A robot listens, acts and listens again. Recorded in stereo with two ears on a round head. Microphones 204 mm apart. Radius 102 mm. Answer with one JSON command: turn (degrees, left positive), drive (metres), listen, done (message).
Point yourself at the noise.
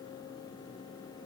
{"listen": true}
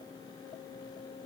{"listen": true}
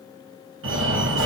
{"turn": -60}
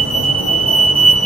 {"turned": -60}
{"turn": -30}
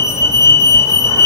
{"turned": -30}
{"turn": 20}
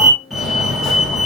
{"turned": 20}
{"done": "Found it: a fire alarm, straight ahead, 2 to 4 m away."}